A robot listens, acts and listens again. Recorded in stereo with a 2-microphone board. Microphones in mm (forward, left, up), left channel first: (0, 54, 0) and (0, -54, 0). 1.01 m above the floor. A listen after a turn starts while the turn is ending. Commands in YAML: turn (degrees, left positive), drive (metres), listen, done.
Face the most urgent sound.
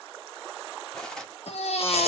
turn: 70
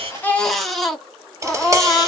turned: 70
done: "Facing the baby crying."